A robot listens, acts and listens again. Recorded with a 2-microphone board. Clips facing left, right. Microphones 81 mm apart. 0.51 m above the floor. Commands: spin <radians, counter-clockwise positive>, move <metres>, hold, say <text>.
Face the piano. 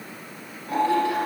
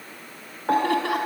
spin -1.05
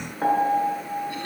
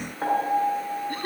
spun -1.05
say Facing the piano.